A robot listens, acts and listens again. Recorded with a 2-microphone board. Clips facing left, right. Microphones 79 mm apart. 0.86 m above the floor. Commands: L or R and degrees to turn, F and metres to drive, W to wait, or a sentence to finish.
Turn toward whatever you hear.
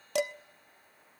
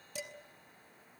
L90
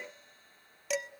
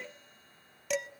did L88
Found it: dishes clattering, straight ahead, under 1 m away.